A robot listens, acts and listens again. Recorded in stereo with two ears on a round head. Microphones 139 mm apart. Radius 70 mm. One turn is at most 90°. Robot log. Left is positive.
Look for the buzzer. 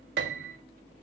cmd idle
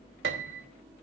cmd idle
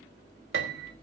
end: I can't make out a buzzer to turn to.